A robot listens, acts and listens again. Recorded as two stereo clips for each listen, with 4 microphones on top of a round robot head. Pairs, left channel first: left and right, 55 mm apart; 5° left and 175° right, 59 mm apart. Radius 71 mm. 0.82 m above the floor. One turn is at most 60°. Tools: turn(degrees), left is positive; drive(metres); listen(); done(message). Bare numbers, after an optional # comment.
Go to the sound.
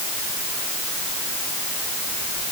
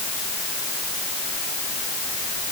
listen()
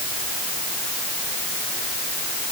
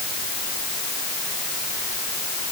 listen()
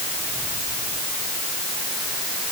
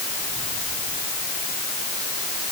done("I can't make out anything to turn to.")